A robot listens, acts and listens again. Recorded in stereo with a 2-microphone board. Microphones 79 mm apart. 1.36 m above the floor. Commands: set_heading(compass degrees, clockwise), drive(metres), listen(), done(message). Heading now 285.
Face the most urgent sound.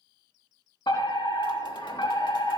set_heading(220)
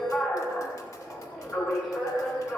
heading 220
done("Facing the fire alarm, over 4 m away.")